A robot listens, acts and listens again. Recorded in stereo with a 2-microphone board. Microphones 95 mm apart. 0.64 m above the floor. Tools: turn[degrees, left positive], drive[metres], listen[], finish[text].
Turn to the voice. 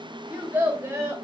Thought: The child speaking: about 30° right or 150° right.
Action: turn[-30]
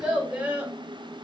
Thought: So it is at 15° right.
Action: turn[-15]
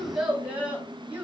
Thought: The child speaking is now 20° right.
Action: turn[-20]
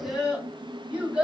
Thought: The child speaking is now 15° right.
Action: turn[-15]
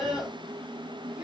Action: finish[Facing the child speaking, 2 to 4 m away.]